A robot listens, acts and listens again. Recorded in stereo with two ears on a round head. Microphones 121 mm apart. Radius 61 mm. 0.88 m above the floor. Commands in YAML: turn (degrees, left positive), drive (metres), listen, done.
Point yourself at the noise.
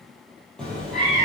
turn: 30
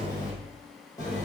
turn: 155
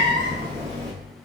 turn: -25
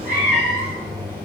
turn: -15
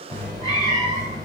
done: "Found it: a cat meowing, straight ahead."